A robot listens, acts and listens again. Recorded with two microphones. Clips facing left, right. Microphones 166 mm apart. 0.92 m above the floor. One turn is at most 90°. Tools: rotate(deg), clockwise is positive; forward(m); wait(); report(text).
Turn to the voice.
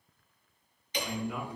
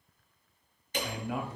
rotate(90)
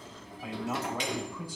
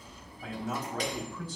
rotate(-10)
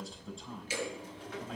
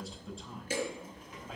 report("Found it: a man speaking, straight ahead.")